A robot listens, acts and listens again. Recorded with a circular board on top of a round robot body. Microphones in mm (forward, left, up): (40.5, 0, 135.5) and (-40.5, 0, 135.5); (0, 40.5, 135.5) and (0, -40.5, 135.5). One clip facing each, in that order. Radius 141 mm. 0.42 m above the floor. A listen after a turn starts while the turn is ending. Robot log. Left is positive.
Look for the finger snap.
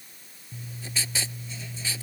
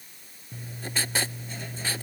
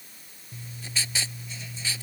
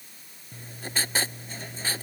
cmd idle
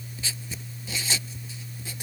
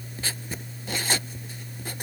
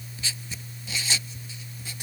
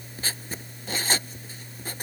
cmd idle
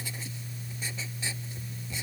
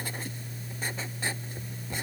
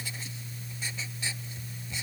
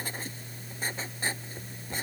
end: I can't make out a finger snap to turn to.